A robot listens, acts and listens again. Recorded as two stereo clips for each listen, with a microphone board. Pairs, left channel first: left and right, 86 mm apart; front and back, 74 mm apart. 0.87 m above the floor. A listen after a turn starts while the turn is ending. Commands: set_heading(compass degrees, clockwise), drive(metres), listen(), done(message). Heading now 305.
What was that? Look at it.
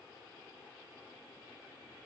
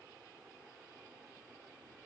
listen()
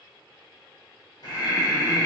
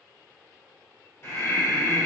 set_heading(250)
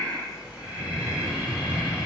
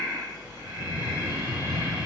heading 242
set_heading(252)
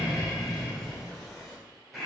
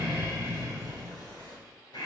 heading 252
done("Facing the breathing.")